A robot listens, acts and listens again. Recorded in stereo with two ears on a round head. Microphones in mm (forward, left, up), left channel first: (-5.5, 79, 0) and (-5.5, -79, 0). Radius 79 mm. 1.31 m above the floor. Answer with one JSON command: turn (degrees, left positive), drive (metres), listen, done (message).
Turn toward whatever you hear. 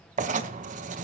{"turn": -45}
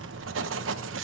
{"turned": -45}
{"turn": -90}
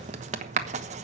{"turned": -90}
{"turn": -40}
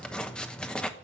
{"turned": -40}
{"done": "Found it: writing, straight ahead."}